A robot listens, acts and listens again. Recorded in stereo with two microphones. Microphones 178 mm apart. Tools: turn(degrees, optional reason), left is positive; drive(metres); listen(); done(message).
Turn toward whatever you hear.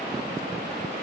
listen()
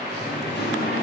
turn(degrees=75, reason="The singing: about 75° left or 105° left.")
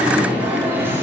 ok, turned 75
turn(degrees=-15, reason="So it is at 15° right.")
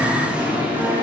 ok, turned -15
turn(degrees=-10, reason="The singing is now 10° right.")
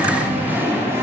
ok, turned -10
turn(degrees=-15, reason="The singing is now 15° right.")
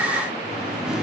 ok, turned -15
done("Found it: singing, straight ahead.")